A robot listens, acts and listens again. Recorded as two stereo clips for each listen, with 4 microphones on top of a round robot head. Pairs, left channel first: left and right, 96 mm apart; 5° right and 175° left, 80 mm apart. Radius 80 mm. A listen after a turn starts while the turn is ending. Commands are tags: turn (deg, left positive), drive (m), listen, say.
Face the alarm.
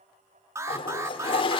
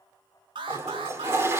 <turn deg="-150"/>
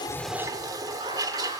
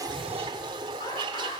<listen/>
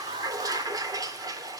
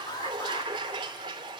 <turn deg="-50"/>
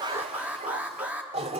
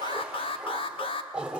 <turn deg="-10"/>
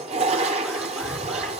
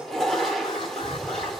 <listen/>
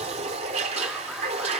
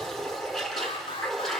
<listen/>
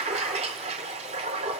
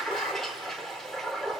<say>I heard an alarm from this way, but can't make it out now.</say>